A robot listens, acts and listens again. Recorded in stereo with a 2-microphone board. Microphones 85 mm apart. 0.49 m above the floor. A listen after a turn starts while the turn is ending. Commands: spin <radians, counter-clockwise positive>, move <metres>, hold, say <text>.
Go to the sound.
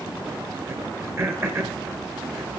spin -0.52
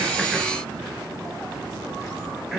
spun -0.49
move 1.0
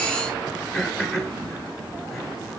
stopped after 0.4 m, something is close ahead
say Blocked. The throat clearing is further on, straight ahead.